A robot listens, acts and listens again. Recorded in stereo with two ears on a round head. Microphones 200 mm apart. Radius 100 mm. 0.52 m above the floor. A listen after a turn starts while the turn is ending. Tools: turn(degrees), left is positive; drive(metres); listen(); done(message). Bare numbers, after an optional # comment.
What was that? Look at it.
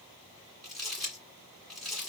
turn(30)
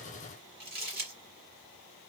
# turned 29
# So it is at 30° right.
turn(-30)
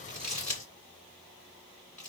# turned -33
done("Found it: crumpling, straight ahead.")